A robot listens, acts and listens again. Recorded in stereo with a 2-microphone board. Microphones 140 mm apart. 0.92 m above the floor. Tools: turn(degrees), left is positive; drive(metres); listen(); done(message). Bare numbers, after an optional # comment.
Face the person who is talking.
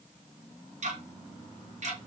listen()
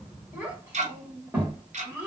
turn(-30)
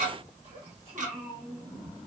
# So it is at 135° right.
turn(-135)
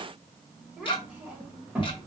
# The child speaking is now 10° right.
turn(-10)
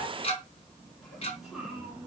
done("Facing the child speaking.")